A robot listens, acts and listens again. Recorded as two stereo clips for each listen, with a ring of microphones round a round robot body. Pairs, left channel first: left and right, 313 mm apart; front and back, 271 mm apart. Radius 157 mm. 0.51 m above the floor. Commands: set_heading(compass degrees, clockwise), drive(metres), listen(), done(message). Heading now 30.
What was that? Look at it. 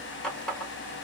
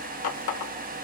done("Found it: a running tap, straight ahead, 1 to 2 m away.")